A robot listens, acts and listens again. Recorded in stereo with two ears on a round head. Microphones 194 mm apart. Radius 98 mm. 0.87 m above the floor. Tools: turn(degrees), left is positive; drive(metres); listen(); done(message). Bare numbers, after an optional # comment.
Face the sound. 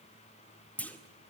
turn(30)
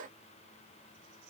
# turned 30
listen()
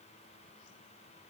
done("I heard a clunk, but can't make it out now. It was about 25° right or 145° left.")